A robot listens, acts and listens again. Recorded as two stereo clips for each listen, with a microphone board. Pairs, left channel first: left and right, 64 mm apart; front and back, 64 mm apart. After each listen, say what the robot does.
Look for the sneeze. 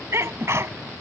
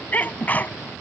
Turn 55° right.
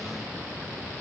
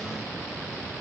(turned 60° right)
Facing where the sneeze came from. I can't hear it now.